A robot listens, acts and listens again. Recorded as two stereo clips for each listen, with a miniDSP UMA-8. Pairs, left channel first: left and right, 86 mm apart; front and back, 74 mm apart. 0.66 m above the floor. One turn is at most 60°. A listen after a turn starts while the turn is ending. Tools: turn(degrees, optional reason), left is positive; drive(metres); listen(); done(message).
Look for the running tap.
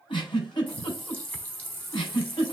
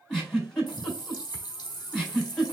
turn(degrees=20, reason="The running tap: 20° left.")
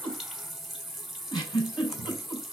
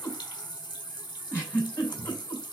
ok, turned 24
done("Found it: a running tap, straight ahead.")